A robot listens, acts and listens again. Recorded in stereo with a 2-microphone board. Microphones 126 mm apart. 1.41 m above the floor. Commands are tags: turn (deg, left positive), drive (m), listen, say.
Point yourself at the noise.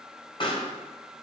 <turn deg="45"/>
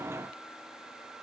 <listen/>
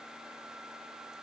<say>I heard a pop, but can't make it out now. It was about straight ahead or 90° left.</say>